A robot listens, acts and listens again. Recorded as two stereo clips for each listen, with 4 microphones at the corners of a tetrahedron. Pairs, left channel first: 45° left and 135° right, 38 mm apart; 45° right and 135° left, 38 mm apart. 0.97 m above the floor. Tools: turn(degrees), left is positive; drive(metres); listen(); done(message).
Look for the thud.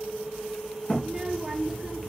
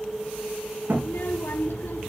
turn(degrees=110)
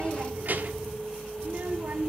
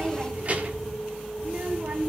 done("I heard a thud from this way, but can't make it out now.")